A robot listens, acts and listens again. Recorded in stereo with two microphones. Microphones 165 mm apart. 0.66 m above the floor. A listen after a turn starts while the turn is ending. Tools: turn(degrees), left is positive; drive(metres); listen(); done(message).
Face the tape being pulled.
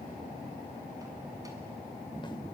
listen()
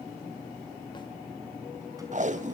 turn(degrees=-50)
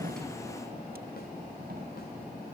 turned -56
listen()
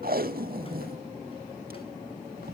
turn(degrees=-75)
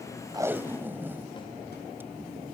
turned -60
turn(degrees=-15)
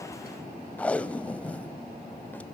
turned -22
turn(degrees=10)
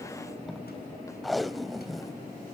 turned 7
done("Found it: tape being pulled, straight ahead, under 1 m away.")